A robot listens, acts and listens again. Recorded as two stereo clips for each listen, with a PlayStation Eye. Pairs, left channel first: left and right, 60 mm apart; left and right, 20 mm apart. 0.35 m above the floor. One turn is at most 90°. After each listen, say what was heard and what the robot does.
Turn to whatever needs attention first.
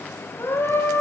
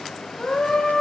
The scream: about 35° left or 145° left. Turn 35° left.
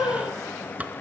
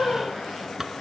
So it is at 110° left. Turn 90° left.
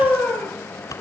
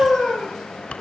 The scream is now 25° left. Turn 25° left.
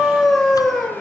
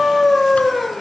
Found it: a scream, straight ahead.